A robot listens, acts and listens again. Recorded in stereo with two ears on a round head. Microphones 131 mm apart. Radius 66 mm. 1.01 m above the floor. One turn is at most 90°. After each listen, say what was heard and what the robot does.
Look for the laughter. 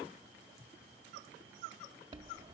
Keep listening.
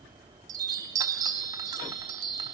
Keep listening.
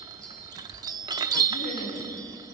Turn 90° left.
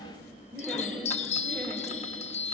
Found it: laughter, straight ahead, over 4 m away.